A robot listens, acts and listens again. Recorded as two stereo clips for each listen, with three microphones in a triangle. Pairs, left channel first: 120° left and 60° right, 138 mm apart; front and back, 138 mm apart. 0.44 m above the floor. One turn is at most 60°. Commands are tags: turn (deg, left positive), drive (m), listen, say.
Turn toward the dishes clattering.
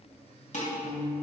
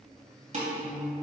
<turn deg="60"/>
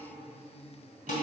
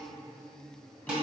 <turn deg="60"/>
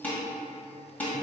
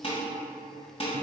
<turn deg="40"/>
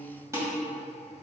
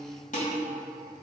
<turn deg="10"/>
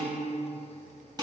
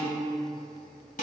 <say>Facing the dishes clattering, 1 to 2 m away.</say>